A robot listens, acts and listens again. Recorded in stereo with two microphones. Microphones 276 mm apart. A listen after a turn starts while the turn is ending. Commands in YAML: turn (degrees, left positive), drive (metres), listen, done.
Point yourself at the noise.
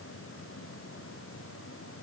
listen: true
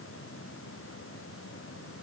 listen: true
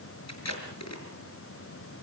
turn: 65
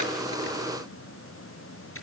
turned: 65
listen: true
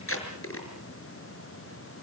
turn: 50
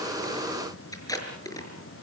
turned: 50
turn: 10
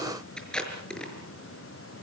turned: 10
done: "Found it: tape being pulled, straight ahead."